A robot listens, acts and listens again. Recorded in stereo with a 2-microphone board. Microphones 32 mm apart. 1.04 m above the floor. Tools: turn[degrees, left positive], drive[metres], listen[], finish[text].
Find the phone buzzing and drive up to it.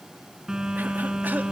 Thought: The phone buzzing: about 25° right or 155° right.
Action: turn[-25]
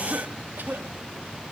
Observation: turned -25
Action: drive[1.0]
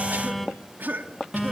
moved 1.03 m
Action: drive[1.0]
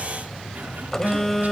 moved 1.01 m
Thought: The phone buzzing is now 15° left.
Action: turn[15]
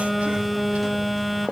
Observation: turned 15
Action: drive[1.0]
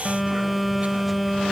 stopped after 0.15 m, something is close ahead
Action: finish[I am next to the phone buzzing.]